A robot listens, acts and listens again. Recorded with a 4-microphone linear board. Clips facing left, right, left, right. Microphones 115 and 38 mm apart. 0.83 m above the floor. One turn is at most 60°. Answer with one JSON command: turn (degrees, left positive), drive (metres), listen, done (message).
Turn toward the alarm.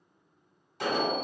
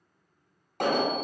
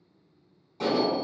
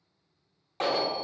{"turn": -60}
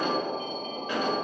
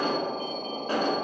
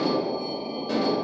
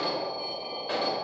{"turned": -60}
{"turn": -40}
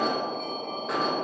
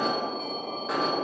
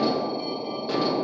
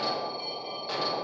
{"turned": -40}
{"done": "Facing the alarm, 1 to 2 m away."}